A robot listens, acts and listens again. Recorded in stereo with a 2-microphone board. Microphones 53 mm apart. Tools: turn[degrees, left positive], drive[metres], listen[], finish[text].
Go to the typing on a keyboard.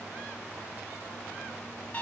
Action: listen[]
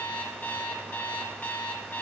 Action: listen[]
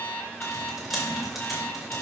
Action: turn[-30]
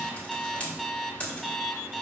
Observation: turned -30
Thought: So it is at 25° left.
Action: turn[25]
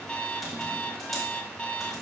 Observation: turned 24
Action: listen[]
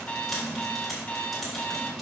Action: drive[1.0]
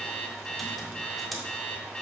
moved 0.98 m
Action: listen[]
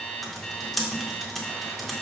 Action: drive[1.0]
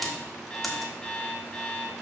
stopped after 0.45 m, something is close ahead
Action: finish[Arrived at the typing on a keyboard, straight ahead.]